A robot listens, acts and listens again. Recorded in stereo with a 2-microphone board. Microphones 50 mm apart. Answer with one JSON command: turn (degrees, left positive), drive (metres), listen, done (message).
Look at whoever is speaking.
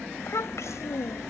{"turn": 90}
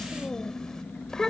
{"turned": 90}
{"turn": 10}
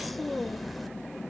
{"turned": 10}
{"done": "Facing the child speaking."}